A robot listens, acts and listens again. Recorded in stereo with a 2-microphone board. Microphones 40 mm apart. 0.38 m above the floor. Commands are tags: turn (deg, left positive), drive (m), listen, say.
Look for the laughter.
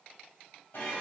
<listen/>
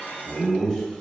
<turn deg="20"/>
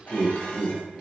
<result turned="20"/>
<turn deg="140"/>
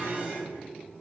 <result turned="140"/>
<turn deg="-50"/>
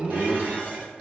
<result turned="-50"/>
<turn deg="-25"/>
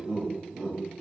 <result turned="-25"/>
<turn deg="-15"/>
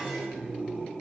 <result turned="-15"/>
<say>Facing the laughter.</say>